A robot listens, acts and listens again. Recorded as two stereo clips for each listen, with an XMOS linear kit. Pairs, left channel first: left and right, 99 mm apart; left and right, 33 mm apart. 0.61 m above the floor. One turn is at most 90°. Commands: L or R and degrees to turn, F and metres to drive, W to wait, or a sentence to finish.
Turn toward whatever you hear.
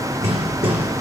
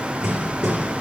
R90
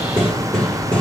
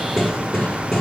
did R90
L10
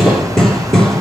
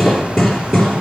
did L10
Found it: hammering, straight ahead, 2 to 4 m away.